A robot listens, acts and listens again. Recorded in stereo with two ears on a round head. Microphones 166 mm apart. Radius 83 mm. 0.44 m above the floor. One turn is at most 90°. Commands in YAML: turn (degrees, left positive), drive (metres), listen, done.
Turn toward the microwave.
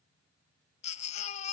listen: true
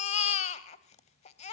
listen: true
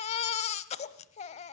done: "I can't make out a microwave to turn to."